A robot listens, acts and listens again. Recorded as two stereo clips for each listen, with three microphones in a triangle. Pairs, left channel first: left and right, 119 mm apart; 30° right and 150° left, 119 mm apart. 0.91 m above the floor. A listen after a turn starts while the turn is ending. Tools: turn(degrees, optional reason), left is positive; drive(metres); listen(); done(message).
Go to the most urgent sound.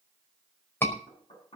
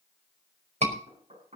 turn(degrees=160, reason="The scream: 160° left.")
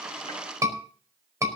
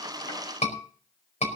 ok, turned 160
turn(degrees=-30, reason="The scream is now 30° right.")
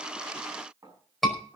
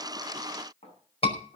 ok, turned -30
drive(metres=1.0)
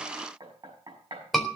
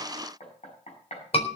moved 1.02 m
drive(metres=1.0)
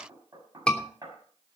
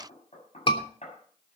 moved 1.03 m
turn(degrees=10, reason="The scream is now 10° left.")
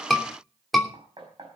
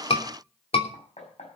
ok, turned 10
drive(metres=1.0)
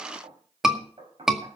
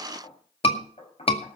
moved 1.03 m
drive(metres=1.0)
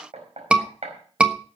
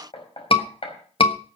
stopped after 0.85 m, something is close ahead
turn(degrees=-10, reason="The scream is now 10° right.")
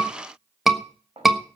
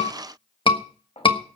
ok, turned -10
done("I am next to the scream.")